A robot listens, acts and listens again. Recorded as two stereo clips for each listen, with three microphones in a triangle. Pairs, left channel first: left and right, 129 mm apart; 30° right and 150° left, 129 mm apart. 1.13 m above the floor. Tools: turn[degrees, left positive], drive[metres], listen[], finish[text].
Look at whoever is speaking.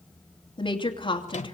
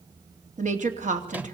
Thought: The woman speaking: 140° left.
Action: turn[140]
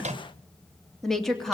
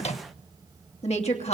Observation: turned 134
Action: finish[Facing the woman speaking.]